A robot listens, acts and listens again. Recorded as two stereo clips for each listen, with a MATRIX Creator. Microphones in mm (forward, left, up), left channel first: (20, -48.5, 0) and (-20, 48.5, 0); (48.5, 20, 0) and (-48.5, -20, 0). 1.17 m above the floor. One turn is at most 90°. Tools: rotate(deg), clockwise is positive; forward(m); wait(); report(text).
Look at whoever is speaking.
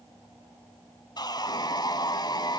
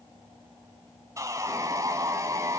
wait()
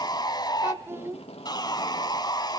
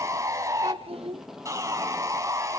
rotate(-90)
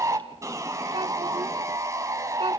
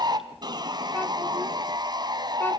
rotate(-90)
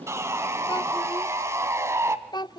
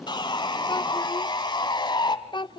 rotate(20)
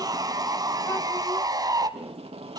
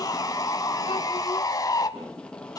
wait()
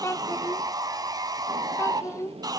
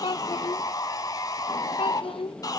report("Facing the child speaking.")